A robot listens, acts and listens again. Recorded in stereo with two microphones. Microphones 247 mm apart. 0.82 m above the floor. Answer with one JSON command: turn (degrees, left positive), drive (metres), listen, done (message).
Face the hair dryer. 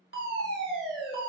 {"listen": true}
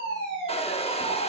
{"turn": 25}
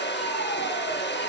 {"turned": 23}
{"turn": 130}
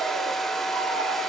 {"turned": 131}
{"done": "Found it: a hair dryer, straight ahead, under 1 m away."}